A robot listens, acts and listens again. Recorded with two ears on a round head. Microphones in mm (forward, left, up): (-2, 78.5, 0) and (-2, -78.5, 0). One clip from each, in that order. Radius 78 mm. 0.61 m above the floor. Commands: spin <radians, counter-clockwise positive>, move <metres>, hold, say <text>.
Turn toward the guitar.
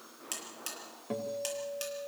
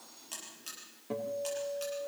spin 0.52
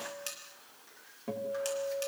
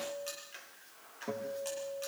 say Found it: a guitar, straight ahead, 2 to 4 m away.